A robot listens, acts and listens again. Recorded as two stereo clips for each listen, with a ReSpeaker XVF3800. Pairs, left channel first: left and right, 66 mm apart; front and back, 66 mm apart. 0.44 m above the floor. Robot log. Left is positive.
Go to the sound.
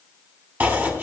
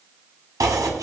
note: The chopping: 150° right.
cmd yaw -150
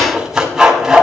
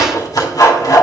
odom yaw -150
note: The chopping is now 10° right.
cmd yaw -10
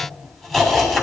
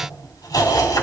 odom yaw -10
cmd fwd 1.0
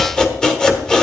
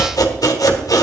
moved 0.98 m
note: The chopping is now 10° left.
cmd yaw +10
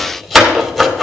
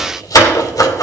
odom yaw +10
cmd fwd 1.0
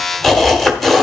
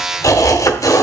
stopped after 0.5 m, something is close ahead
end: I am next to the chopping.